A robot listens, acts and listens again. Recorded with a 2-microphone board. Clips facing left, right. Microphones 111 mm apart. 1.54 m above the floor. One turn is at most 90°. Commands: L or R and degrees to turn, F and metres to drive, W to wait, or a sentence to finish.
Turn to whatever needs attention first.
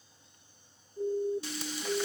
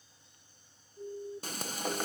L50
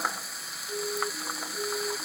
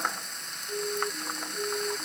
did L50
Found it: a siren, straight ahead.